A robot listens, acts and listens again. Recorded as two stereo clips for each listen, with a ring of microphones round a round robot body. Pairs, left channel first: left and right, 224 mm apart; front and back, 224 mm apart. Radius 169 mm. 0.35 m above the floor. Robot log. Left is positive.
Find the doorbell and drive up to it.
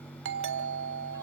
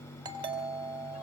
note: The doorbell: 110° right.
cmd yaw -110
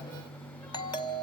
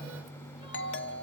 note: The doorbell is now 20° left.
cmd yaw +20
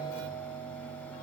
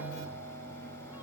note: The doorbell is now 10° left.
cmd yaw +10
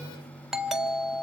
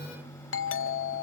cmd fwd 1.0
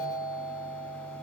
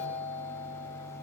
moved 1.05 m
cmd fwd 1.0
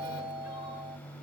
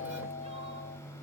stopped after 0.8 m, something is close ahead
end: I am next to the doorbell.